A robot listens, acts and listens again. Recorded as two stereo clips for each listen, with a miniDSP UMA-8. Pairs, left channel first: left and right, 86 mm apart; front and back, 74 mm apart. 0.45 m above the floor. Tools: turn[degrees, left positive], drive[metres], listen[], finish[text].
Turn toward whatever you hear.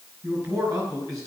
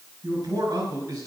Thought: The man speaking: 140° right.
Action: turn[-140]
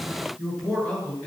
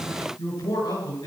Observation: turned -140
Action: finish[Facing the man speaking.]